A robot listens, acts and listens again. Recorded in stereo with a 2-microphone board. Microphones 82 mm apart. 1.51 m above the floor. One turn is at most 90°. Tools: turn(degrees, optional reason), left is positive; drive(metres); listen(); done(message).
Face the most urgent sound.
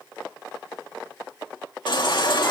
turn(degrees=65, reason="The baby crying: about 65° left or 115° left.")
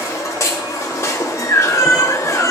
turn(degrees=40, reason="So it is at 40° left.")
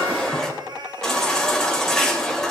done("Found it: a baby crying, straight ahead.")